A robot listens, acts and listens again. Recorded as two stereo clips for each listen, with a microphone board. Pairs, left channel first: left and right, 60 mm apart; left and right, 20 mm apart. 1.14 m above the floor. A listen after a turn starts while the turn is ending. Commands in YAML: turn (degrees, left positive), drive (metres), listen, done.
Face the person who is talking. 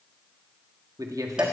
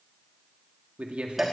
turn: -90
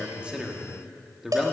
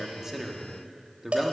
done: "Found it: a man speaking, straight ahead."